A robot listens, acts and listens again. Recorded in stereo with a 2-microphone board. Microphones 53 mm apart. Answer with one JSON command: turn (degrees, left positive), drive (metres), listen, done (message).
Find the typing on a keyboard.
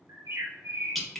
{"listen": true}
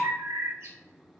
{"listen": true}
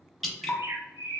{"done": "I can't make out typing on a keyboard, only dripping and a bird."}